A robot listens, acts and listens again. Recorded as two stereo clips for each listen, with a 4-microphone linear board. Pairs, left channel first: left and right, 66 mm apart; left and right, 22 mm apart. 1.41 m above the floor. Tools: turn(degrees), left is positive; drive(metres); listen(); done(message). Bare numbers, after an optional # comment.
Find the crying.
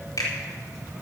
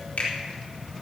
listen()
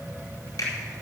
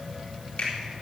listen()
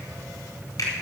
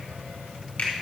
done("I can't make out crying, only a finger snap.")